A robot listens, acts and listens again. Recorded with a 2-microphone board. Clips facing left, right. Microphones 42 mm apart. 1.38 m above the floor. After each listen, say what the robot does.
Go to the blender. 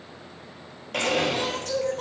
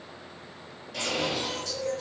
Turn 70° left.
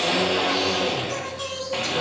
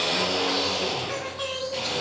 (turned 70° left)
Turn 40° left.
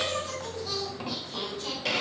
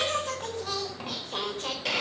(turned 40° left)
Drive 1.0 m forward.
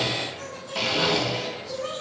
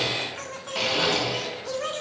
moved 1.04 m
Drive 1.0 m forward.
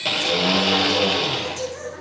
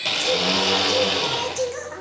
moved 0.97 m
Turn 10° left.
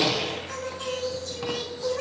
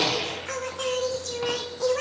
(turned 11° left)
Drive 1.0 m forward.
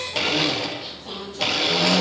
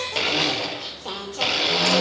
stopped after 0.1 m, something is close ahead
I am next to the blender.